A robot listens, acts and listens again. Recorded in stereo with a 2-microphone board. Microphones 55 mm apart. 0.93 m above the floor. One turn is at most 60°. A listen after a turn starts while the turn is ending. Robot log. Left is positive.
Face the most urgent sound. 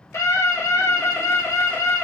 note: The scream: about 70° left or 110° left.
cmd yaw +60
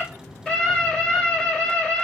note: So it is at 15° left.
cmd yaw +15
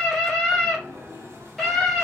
end: Facing the scream.